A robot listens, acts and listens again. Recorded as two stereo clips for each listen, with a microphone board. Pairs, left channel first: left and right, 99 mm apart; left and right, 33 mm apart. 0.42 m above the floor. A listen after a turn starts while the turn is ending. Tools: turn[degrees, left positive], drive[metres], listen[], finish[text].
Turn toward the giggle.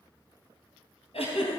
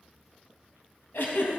Thought: The giggle: about 70° left or 110° left.
Action: turn[70]
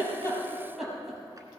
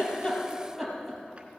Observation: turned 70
Action: finish[Facing the giggle.]